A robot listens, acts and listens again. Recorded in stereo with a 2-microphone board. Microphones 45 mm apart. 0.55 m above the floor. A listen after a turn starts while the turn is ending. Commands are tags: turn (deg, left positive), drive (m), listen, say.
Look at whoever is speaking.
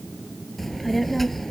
<turn deg="30"/>
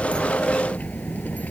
<turn deg="145"/>
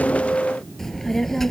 <turn deg="10"/>
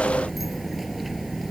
<say>Facing the child speaking.</say>